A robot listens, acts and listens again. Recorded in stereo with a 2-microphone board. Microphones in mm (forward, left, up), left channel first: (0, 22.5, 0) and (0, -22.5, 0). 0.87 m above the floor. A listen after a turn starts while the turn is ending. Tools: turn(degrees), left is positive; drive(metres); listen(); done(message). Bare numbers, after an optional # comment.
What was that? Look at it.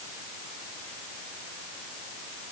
listen()
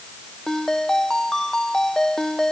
turn(30)
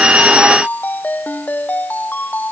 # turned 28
# So it is at 140° left.
turn(140)
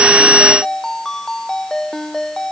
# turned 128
# The ringtone is now 10° left.
turn(10)
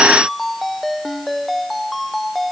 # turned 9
done("Facing the ringtone.")